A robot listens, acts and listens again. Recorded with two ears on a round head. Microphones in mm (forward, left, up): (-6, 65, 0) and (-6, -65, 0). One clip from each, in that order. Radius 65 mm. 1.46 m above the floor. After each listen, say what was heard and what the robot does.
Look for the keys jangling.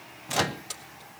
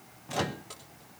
Turn 90° left.
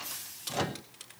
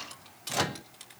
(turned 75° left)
So it is at 10° left. Turn 10° left.
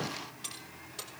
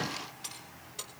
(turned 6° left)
Facing the keys jangling.